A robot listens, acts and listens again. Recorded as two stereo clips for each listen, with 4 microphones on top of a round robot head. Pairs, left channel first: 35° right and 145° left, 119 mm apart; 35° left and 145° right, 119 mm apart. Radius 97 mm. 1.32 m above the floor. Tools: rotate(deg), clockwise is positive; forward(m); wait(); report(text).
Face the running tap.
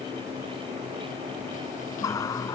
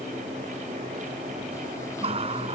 rotate(100)
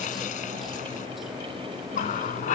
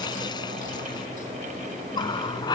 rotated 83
rotate(20)
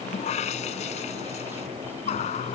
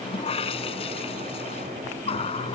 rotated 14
report("Found it: a running tap, straight ahead.")